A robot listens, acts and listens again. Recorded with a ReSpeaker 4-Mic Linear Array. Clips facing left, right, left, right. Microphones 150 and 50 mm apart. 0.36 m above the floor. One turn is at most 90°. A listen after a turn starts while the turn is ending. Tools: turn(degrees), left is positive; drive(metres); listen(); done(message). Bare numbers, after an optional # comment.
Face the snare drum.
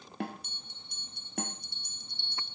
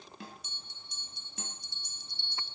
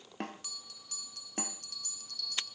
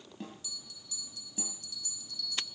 # The snare drum: about 65° left or 115° left.
turn(65)
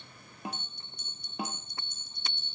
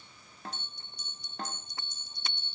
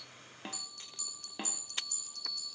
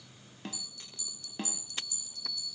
# So it is at 10° left.
turn(10)
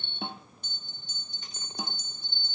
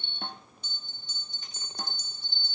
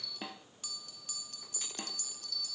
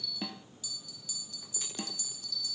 done("Facing the snare drum, 1 to 2 m away.")